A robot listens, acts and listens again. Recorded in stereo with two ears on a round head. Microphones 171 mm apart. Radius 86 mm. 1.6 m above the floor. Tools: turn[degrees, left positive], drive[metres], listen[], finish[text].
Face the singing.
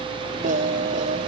Thought: The singing: about 45° right or 135° right.
Action: turn[-45]
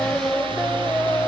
Action: finish[Facing the singing.]